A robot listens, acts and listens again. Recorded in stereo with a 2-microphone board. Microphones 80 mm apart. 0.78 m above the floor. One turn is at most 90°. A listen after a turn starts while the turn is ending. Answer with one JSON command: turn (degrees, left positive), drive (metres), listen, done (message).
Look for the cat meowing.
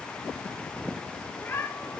{"turn": 30}
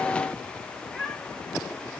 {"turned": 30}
{"turn": 10}
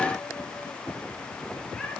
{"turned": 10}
{"listen": true}
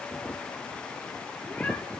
{"listen": true}
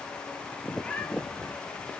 {"turn": 15}
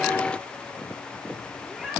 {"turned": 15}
{"done": "Found it: a cat meowing, straight ahead, over 4 m away."}